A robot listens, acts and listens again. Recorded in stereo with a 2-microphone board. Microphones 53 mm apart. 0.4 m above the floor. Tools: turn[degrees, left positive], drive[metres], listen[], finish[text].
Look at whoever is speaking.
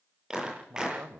Thought: The man speaking: about 50° right or 130° right.
Action: turn[-50]
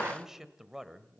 Thought: So it is at 10° right.
Action: turn[-10]
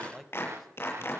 Action: finish[Facing the man speaking, 1 to 2 m away.]